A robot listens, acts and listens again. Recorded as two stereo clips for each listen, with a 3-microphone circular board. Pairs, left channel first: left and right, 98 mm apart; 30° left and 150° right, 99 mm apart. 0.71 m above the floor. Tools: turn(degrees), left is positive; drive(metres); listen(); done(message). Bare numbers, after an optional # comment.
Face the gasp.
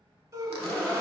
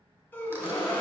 # The gasp: 40° right.
turn(-40)
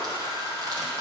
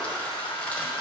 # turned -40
done("I heard a gasp from this way, but can't make it out now.")